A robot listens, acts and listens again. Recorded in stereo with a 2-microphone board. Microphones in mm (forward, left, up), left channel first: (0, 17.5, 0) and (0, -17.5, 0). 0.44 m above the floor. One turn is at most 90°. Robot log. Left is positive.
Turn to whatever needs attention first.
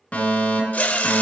note: The fire alarm: about 40° left or 140° left.
cmd yaw +40
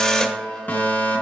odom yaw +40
note: So it is at 90° left.
cmd yaw +90
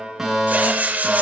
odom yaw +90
note: The fire alarm is now 15° right.
cmd yaw -15
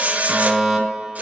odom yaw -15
end: Facing the fire alarm.